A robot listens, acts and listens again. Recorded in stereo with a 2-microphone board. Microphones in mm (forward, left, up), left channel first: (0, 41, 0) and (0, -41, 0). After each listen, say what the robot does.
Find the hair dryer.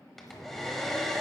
Turn 30° left.
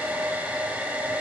Turn 25° right.
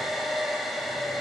Facing the hair dryer, 1 to 2 m away.